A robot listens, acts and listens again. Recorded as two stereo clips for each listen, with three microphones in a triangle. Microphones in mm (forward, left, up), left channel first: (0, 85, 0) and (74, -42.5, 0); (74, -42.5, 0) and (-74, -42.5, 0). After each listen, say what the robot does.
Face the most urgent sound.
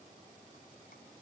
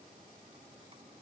Keep listening.
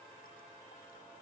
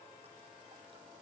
Keep listening.
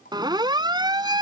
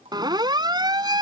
Turn 120° right.
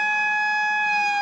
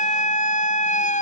Turn 30° left.
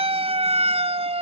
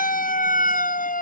Turn 15° right.
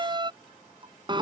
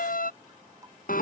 Found it: a siren, straight ahead.